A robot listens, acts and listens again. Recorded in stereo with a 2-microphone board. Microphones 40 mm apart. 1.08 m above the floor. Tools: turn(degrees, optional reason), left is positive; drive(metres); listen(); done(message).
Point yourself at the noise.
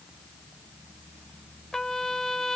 turn(degrees=30)
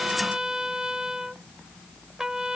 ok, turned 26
turn(degrees=-15, reason="So it is at 15° right.")
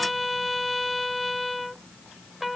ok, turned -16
done("Facing the trumpet.")